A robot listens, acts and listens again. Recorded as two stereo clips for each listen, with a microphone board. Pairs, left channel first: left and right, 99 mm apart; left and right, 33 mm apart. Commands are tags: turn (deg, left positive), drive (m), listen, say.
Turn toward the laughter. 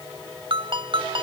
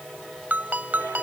<listen/>
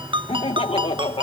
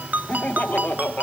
<turn deg="65"/>
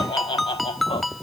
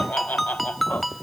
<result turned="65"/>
<turn deg="70"/>
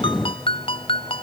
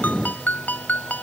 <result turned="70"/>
<listen/>
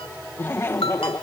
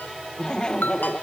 <turn deg="30"/>
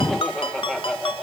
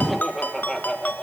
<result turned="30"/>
<say>Found it: laughter, straight ahead.</say>